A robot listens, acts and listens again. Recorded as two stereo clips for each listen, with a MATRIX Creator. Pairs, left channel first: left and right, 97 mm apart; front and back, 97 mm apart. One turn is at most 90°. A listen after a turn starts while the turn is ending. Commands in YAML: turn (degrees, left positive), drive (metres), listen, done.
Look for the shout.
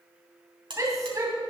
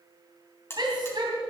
turn: -90
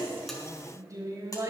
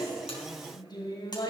turn: -40
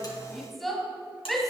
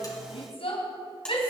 done: "Found it: a shout, straight ahead."